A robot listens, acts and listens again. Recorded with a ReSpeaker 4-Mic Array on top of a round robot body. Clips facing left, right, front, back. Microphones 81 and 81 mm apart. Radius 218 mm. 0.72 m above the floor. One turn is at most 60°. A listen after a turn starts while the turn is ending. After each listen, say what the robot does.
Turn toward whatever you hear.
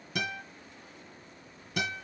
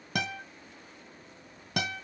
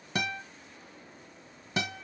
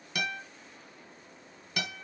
Turn 60° right.
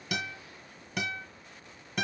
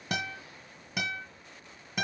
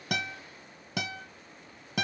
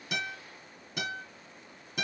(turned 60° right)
Found it: a guitar, straight ahead.